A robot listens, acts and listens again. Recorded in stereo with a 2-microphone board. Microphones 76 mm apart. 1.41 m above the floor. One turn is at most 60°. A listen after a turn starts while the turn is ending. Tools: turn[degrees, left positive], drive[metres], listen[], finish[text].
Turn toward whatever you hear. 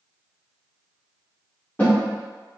Thought: The snare drum: about 20° left or 160° left.
Action: turn[20]
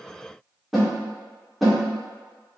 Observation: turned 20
Action: finish[Facing the snare drum, 1 to 2 m away.]